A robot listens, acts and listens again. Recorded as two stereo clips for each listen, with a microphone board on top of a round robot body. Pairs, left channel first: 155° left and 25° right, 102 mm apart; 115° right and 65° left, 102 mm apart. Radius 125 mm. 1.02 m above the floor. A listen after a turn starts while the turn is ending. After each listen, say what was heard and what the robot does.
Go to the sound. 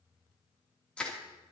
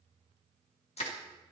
The crushing: 120° right. Turn 120° right.
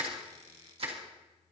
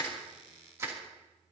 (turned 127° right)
Drive 1.0 m forward.
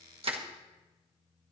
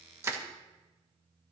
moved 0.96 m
Drive 1.0 m forward.
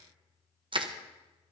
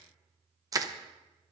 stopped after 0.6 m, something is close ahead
The crushing is now 15° left. Turn 15° left.
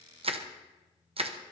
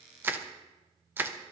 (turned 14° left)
Arrived at the crushing, straight ahead.